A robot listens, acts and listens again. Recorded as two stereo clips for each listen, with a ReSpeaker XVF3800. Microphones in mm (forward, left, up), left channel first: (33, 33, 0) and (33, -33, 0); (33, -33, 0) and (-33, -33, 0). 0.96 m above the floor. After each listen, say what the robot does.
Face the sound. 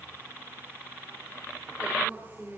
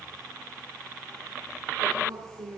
Turn 155° right.
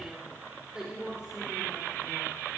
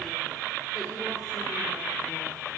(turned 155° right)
Keep listening.
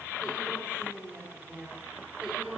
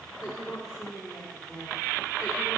Turn 20° right.
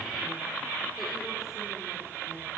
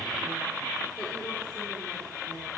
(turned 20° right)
Keep listening.
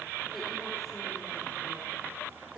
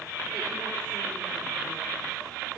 Keep listening.
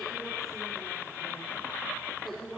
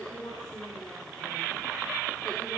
Facing where the woman speaking came from. I can't hear it now.